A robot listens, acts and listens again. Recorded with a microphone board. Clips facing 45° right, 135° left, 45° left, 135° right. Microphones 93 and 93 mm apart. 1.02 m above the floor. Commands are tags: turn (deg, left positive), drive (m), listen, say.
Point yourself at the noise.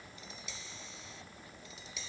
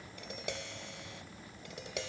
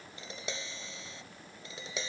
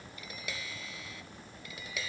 <turn deg="110"/>
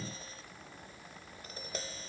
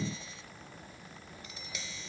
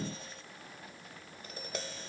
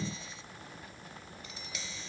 <say>Facing the tapping.</say>